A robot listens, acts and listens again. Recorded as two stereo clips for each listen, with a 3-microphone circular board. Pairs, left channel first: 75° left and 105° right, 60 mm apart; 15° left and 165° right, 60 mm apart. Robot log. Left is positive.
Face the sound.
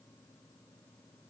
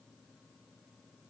cmd idle
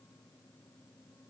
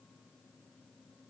cmd idle
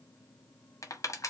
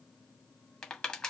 note: The crushing: 90° left.
cmd yaw +90
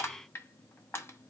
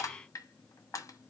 note: The crushing is now 30° left.
cmd yaw +30
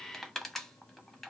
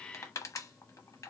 note: The crushing is now 10° right.
cmd yaw -10
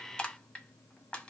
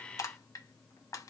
end: Found it: crushing, straight ahead, under 1 m away.